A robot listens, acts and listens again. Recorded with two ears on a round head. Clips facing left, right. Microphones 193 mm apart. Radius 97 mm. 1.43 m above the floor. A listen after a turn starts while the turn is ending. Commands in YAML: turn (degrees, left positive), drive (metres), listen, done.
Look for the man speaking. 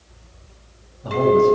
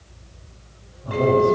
turn: 90
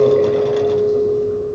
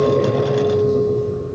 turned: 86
listen: true
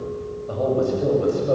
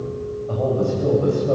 turn: 20
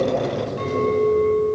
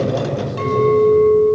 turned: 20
done: "Found it: a man speaking, straight ahead."